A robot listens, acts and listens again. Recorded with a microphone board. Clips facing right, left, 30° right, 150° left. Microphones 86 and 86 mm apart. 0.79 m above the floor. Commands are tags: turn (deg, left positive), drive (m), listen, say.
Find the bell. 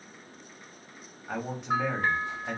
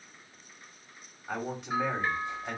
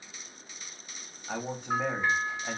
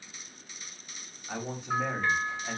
<turn deg="-100"/>
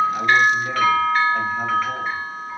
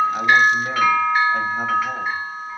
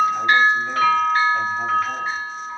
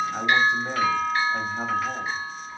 <turn deg="15"/>
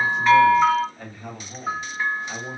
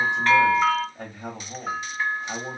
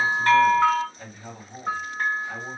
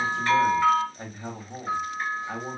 <say>Found it: a bell, straight ahead, 1 to 2 m away.</say>